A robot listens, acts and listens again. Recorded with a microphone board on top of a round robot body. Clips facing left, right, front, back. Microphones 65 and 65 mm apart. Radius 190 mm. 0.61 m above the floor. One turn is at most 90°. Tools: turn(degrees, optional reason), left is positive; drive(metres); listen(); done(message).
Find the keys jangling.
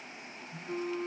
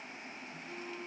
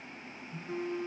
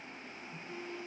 listen()
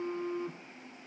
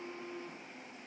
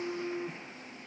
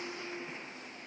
listen()
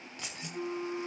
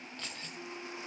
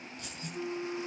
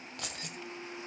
turn(degrees=90, reason="The keys jangling: 165° left.")
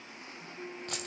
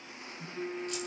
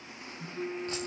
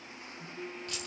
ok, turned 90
turn(degrees=75, reason="Nothing new. It was at 75° left.")
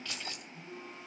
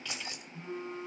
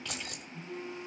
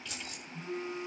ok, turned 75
turn(degrees=-20, reason="The keys jangling is now 20° right.")
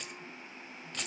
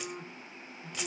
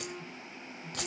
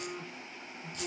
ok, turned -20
done("Found it: keys jangling, straight ahead, 2 to 4 m away.")